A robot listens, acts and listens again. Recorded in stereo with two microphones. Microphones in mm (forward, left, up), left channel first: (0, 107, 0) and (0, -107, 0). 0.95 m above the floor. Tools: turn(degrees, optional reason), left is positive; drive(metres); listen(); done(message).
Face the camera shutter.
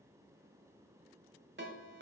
listen()
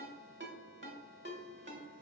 listen()
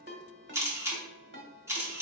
turn(degrees=-30)
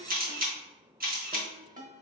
turn(degrees=-140, reason="So it is at 140° right.")
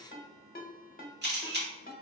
turn(degrees=-50, reason="The camera shutter is now 50° right.")
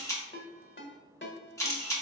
turn(degrees=15, reason="The camera shutter is now 15° left.")
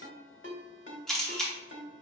done("Found it: a camera shutter, straight ahead.")